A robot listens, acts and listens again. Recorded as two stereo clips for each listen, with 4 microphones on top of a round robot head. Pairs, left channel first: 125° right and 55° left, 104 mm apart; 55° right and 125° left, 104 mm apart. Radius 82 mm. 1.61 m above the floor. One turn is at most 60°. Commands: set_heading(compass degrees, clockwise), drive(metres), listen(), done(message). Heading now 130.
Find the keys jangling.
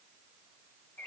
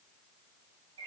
listen()
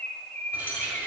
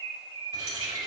set_heading(70)
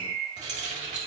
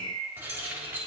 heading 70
set_heading(15)
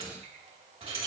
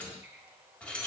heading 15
set_heading(355)
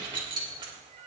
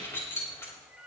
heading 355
set_heading(345)
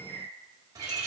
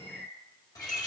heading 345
done("Found it: keys jangling, straight ahead, 2 to 4 m away.")